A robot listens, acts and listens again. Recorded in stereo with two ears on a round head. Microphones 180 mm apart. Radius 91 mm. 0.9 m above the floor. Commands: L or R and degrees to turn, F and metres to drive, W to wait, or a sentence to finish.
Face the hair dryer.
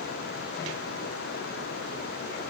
W
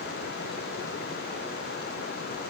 W
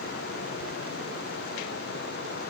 I can't make out a hair dryer to turn to.